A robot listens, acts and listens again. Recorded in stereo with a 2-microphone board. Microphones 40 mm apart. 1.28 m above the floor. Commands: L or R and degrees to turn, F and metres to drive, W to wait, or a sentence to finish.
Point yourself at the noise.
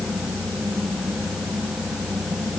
W
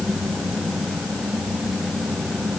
W
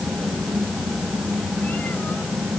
I can't make out anything.